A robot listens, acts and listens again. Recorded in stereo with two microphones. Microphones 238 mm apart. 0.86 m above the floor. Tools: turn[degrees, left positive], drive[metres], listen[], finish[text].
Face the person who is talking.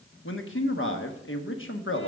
Thought: The man speaking: about 55° left or 125° left.
Action: turn[55]
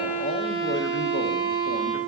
Action: listen[]
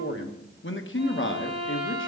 Thought: So it is at 60° left.
Action: turn[60]
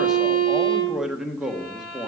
Action: finish[Found it: a man speaking, straight ahead, 1 to 2 m away.]